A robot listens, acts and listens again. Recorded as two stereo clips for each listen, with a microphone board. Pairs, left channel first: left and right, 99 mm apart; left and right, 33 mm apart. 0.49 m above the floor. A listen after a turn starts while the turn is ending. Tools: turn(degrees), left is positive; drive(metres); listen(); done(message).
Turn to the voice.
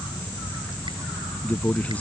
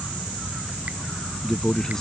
turn(degrees=15)
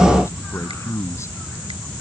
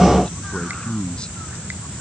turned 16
turn(degrees=150)
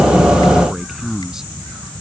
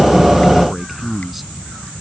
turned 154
done("Facing the man speaking.")